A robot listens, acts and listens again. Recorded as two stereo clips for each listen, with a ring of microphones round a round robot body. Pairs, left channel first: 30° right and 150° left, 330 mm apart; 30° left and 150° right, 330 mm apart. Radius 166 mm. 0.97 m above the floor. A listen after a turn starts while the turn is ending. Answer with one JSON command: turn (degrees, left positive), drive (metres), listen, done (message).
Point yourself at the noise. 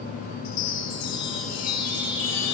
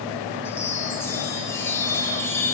{"turn": -55}
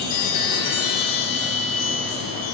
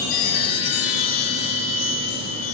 {"done": "Found it: a chime, straight ahead."}